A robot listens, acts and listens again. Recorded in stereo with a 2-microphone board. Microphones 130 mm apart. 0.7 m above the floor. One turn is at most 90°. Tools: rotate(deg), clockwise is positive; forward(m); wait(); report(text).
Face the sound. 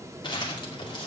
rotate(-35)
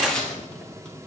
report("Found it: crumpling, straight ahead.")